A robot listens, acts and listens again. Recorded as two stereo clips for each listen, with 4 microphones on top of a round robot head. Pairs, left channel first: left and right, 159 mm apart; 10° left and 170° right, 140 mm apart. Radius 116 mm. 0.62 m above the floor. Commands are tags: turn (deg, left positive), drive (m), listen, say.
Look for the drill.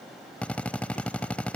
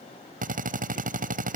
<turn deg="175"/>
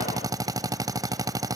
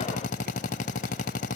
<turn deg="-25"/>
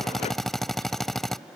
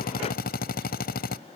<say>Facing the drill.</say>